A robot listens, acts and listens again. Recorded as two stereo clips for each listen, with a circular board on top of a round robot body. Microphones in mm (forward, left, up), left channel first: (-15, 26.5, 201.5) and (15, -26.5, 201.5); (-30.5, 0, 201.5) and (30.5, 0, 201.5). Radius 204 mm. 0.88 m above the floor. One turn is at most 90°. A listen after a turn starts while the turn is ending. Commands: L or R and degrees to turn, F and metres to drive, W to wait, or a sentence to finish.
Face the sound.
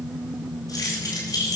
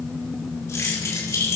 L90
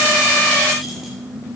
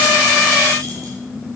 L50
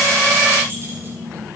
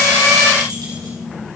W
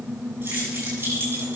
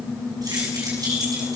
Found it: keys jangling, straight ahead, over 4 m away.